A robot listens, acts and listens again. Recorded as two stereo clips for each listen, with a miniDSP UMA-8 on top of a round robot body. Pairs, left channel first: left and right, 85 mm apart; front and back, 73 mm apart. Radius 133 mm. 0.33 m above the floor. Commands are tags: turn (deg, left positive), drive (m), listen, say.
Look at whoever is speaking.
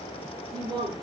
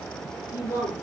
<turn deg="-55"/>
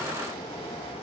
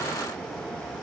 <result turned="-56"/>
<listen/>
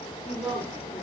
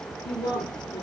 <say>Found it: a woman speaking, straight ahead, over 4 m away.</say>